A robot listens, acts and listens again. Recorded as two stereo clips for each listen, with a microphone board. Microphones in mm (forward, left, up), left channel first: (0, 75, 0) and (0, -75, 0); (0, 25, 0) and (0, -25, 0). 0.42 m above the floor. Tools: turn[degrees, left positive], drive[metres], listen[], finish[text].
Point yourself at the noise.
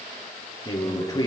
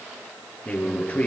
Thought: The man speaking: about 25° left or 155° left.
Action: turn[25]
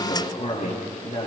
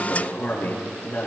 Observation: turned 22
Thought: So it is at 130° left.
Action: turn[130]
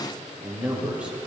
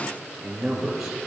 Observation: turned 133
Thought: The man speaking is now 10° right.
Action: turn[-10]
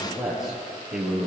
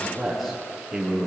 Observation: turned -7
Action: finish[Found it: a man speaking, straight ahead, over 4 m away.]